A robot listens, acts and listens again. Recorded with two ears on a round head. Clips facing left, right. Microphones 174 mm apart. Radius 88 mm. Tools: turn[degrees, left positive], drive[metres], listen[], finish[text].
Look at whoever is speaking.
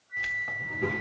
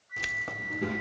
Thought: The child speaking: about 20° right or 160° right.
Action: turn[-20]
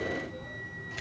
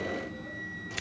Thought: So it is at 140° right.
Action: turn[-140]
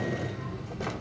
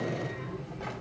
Thought: The child speaking is now 15° left.
Action: turn[15]
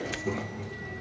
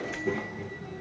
Action: finish[Facing the child speaking.]